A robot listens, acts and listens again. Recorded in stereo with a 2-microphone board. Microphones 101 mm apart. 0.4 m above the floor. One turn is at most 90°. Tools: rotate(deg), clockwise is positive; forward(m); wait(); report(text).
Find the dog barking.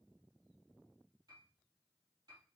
wait()
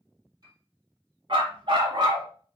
rotate(50)
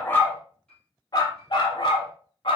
rotate(-60)
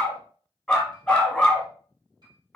report("Facing the dog barking.")